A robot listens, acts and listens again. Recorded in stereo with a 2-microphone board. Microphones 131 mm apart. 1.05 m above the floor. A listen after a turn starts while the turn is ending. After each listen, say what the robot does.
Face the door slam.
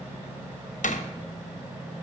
Turn 70° left.
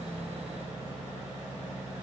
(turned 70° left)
Keep listening.
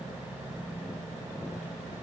I heard a door slam, but can't make it out now. It was about straight ahead or 40° left.